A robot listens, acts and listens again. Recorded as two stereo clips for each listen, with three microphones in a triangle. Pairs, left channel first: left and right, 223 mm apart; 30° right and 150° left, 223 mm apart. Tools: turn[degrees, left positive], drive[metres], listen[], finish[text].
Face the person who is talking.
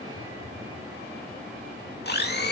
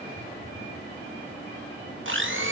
Action: listen[]
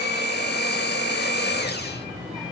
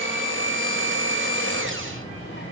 Action: finish[Found it: a child speaking, straight ahead.]